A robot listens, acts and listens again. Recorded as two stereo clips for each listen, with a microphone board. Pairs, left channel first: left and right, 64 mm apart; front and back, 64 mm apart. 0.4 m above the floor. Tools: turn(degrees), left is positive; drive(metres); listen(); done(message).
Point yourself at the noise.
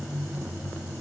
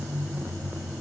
listen()
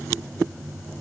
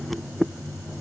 listen()
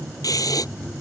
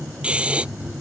turn(degrees=110)
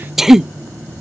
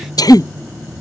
done("Facing the breathing.")